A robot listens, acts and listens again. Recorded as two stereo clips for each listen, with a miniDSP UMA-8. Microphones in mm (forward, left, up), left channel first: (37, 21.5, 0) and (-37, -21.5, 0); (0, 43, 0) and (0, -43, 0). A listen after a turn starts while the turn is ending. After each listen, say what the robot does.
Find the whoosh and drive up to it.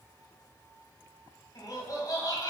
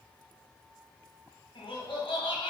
Keep listening.
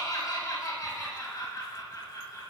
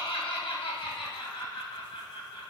Keep listening.
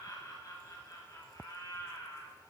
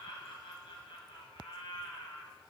I can't make out a whoosh, only laughter.